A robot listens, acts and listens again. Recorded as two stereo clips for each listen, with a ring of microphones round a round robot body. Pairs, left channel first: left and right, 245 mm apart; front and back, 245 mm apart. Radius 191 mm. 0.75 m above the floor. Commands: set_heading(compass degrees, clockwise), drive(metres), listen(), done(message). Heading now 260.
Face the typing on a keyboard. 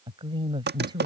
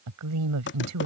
set_heading(305)
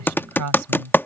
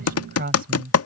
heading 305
set_heading(295)
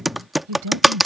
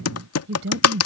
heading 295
done("Found it: typing on a keyboard, straight ahead.")